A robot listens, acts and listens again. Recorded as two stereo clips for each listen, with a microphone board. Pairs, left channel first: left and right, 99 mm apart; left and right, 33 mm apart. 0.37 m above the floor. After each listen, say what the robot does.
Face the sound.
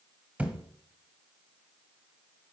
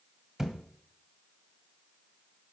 Turn 30° right.
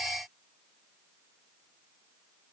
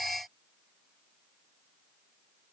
Keep listening.
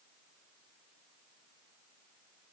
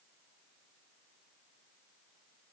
I heard a thud, but can't make it out now. It was about 15° left or 135° right.